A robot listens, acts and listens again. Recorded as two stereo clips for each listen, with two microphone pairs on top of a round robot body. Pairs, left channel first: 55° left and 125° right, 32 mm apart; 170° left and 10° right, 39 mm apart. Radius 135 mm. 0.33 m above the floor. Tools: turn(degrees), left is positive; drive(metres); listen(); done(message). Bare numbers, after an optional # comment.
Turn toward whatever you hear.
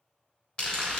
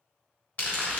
# The crumpling: 115° left.
turn(115)
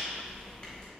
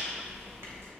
done("Found it: crumpling, straight ahead, 1 to 2 m away.")